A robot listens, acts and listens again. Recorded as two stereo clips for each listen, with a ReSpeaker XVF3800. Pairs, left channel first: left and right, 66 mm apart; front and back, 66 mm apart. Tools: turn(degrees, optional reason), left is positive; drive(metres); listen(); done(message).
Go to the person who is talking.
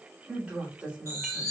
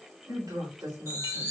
turn(degrees=-160, reason="The woman speaking: 160° right.")
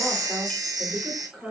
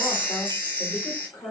drive(metres=1.0)
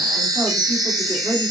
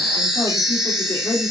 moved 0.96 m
drive(metres=1.0)
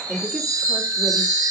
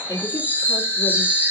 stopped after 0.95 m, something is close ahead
turn(degrees=-15, reason="The woman speaking is now 15° right.")
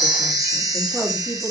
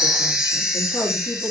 done("Arrived at the woman speaking, straight ahead.")